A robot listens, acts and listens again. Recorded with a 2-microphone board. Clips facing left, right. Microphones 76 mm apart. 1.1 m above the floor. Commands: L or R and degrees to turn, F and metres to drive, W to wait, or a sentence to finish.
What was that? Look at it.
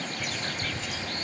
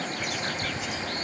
R15
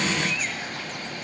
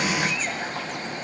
W
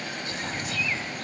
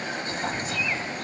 R150
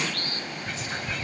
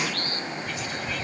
L30
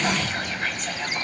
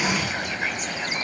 R10
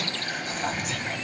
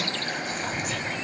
Found it: whispering, straight ahead.